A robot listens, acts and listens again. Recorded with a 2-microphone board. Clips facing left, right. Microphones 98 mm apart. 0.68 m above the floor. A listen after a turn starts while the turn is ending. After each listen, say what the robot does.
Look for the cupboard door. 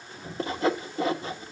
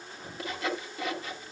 Turn 30° right.
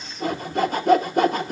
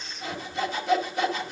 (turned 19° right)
Keep listening.
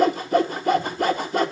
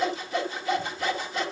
Keep listening.
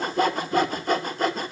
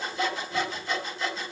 I heard a cupboard door, but can't make it out now. It was about 10° left or 155° right.